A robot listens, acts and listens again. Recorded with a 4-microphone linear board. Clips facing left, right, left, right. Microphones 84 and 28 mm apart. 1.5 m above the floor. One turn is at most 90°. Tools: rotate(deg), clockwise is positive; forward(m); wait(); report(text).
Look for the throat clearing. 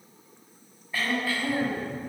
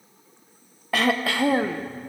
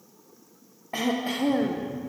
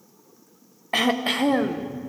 rotate(90)
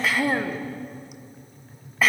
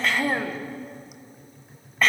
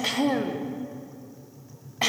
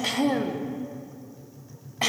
report("Found it: throat clearing, straight ahead, 1 to 2 m away.")